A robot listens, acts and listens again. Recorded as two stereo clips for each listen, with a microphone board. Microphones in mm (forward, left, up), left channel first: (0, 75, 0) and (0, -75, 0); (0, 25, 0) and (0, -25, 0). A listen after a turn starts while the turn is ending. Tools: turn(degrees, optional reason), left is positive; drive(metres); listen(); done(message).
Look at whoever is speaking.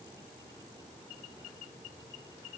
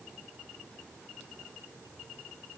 listen()
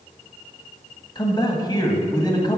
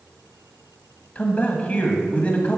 turn(degrees=30, reason="The man speaking: about 30° left or 150° left.")
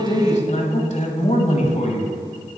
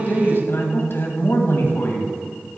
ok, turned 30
turn(degrees=115, reason="So it is at 115° left.")
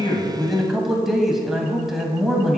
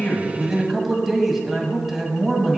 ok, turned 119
done("Found it: a man speaking, straight ahead, 1 to 2 m away.")